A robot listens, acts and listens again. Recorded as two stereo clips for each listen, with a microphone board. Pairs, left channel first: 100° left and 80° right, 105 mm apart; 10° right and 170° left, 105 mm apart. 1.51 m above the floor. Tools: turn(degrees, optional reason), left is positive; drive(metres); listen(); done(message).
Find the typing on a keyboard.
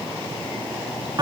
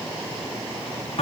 listen()
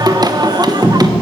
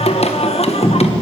listen()
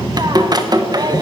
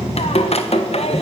done("I can't make out typing on a keyboard to turn to.")